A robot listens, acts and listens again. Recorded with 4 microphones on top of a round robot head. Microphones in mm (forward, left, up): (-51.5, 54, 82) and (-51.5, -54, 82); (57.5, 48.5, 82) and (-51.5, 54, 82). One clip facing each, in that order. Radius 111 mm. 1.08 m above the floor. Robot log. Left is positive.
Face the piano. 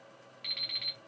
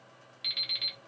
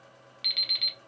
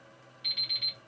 cmd idle
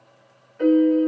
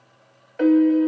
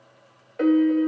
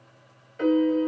note: The piano: 55° right.
cmd yaw -55
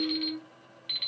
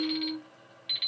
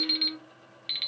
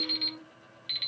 note: The piano is now 15° right.
cmd yaw -15
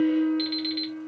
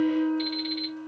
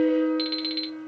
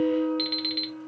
end: Facing the piano, 1 to 2 m away.